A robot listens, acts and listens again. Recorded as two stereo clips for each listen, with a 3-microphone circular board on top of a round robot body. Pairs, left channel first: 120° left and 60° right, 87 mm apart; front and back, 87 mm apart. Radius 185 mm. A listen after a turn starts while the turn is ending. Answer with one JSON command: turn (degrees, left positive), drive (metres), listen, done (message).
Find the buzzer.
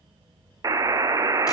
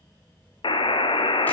{"turn": -10}
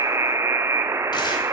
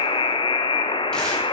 {"done": "Found it: a buzzer, straight ahead."}